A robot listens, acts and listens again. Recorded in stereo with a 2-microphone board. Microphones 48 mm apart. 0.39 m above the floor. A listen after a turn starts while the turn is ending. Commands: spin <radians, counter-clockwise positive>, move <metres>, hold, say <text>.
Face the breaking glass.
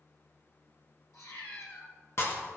spin 0.96
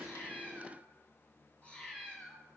hold
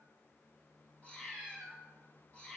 say I heard breaking glass, but can't make it out now. It was about straight ahead or 70° left.